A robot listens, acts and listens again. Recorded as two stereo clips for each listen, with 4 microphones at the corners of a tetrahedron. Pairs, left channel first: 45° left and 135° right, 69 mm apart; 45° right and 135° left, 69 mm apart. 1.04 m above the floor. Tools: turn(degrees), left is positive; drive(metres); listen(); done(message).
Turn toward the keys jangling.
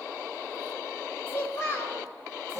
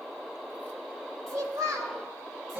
listen()
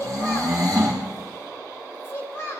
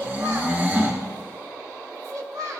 listen()
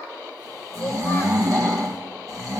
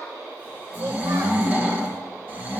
done("I can't make out keys jangling, only snoring and a child speaking.")